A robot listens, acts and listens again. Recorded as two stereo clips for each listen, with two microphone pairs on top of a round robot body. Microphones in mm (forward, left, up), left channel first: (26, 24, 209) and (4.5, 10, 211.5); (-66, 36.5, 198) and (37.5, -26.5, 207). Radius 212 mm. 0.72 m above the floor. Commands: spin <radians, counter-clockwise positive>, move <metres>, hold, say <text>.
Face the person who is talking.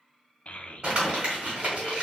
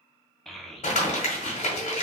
spin 1.05
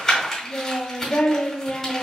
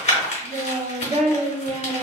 say Found it: a child speaking, straight ahead, under 1 m away.